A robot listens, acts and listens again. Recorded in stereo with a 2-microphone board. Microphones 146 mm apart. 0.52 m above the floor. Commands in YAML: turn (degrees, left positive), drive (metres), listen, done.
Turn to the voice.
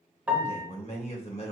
turn: 45
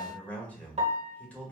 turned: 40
turn: 10
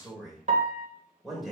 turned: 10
done: "Found it: a man speaking, straight ahead."